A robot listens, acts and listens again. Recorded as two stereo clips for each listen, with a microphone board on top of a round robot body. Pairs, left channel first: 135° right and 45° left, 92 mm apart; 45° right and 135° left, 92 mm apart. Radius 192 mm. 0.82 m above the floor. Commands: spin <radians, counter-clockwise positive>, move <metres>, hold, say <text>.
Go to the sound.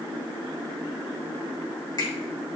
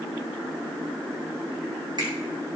spin 3.05
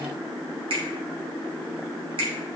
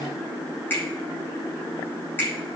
spin 0.44
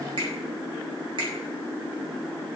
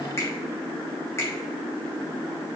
spin 0.26
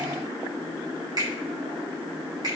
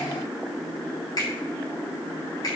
move 1.0
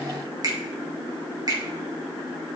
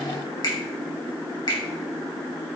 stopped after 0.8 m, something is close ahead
say Blocked. The finger snap is further on, straight ahead.